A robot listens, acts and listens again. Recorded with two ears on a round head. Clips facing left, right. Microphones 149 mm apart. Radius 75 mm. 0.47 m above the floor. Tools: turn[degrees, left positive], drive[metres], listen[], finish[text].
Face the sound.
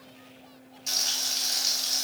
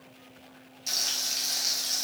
Action: turn[-30]
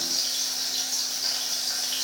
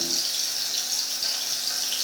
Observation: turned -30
Thought: So it is at 145° right.
Action: turn[-145]
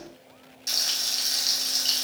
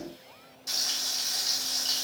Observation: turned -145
Thought: The frying is now 30° left.
Action: turn[30]
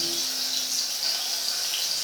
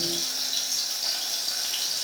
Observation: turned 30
Action: finish[Found it: frying, straight ahead.]